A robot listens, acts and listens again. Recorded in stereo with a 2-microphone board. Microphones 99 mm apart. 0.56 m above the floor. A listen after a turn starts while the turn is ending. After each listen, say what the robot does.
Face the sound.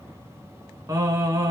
Turn 35° right.
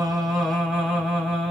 Found it: singing, straight ahead, 1 to 2 m away.